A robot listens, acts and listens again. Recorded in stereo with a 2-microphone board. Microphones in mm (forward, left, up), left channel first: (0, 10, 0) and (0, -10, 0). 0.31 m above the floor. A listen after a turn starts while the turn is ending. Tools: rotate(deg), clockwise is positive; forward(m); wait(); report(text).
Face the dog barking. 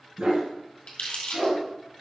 rotate(90)
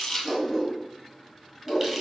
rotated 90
report("Facing the dog barking, 2 to 4 m away.")